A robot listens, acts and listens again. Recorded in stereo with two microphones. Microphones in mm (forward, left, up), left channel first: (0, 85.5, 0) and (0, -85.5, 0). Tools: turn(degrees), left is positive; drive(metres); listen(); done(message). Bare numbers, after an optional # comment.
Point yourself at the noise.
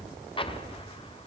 # The explosion: about 30° left or 150° left.
turn(30)
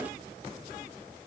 listen()
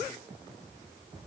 done("I heard an explosion, but can't make it out now. It was about straight ahead or 120° left.")